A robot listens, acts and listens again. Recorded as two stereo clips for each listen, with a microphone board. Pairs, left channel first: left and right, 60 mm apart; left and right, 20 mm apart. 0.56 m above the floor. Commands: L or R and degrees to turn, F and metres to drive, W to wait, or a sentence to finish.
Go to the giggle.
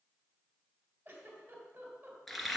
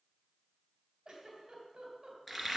R30
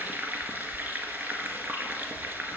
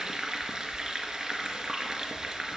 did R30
W
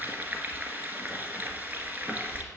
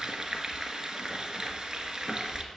W
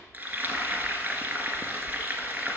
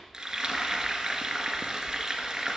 I heard a giggle, but can't make it out now. It was about straight ahead or 120° right. I did not reach it.